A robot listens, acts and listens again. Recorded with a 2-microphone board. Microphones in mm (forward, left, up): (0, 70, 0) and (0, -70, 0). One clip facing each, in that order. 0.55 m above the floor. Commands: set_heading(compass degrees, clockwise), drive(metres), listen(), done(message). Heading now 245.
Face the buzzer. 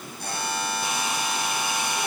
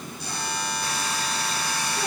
set_heading(190)
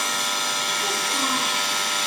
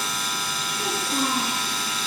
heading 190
listen()
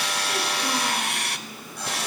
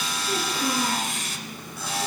listen()
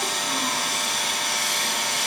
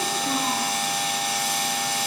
done("I heard a buzzer, but can't make it out now. It was about straight ahead or 70° left.")